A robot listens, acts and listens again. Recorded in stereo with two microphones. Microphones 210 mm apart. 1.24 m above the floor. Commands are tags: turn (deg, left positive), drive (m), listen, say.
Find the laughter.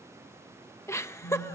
<turn deg="30"/>
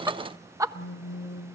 <turn deg="-15"/>
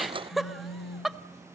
<say>Facing the laughter, 1 to 2 m away.</say>